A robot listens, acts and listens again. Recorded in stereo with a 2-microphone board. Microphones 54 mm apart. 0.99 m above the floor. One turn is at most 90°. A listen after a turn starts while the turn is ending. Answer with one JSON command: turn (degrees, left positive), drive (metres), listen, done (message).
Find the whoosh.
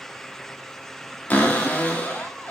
{"listen": true}
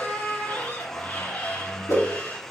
{"turn": 90}
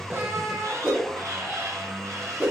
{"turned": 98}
{"turn": -25}
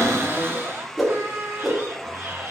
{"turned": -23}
{"done": "Found it: a whoosh, straight ahead, 1 to 2 m away."}